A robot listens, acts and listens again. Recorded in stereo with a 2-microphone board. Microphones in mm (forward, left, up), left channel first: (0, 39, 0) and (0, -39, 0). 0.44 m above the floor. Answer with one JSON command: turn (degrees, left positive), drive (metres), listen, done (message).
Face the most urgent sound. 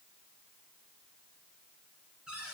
{"listen": true}
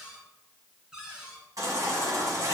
{"turn": -50}
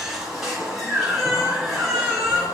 {"done": "Facing the baby crying, 2 to 4 m away."}